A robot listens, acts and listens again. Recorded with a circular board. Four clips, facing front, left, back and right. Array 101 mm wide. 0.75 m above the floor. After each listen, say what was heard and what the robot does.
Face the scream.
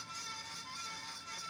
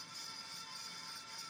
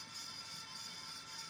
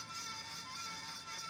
Keep listening.
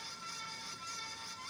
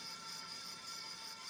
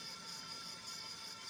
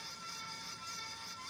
Keep listening.
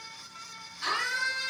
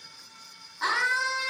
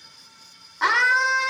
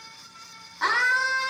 The scream: 165° right. Turn 165° right.
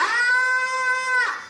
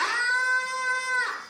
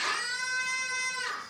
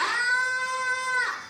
Facing the scream.